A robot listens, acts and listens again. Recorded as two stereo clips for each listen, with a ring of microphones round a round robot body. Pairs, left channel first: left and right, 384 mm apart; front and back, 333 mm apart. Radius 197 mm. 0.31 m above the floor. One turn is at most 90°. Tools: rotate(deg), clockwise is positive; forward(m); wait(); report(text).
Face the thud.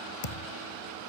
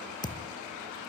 rotate(-80)
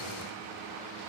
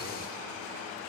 report("Facing where the thud came from. I can't hear it now.")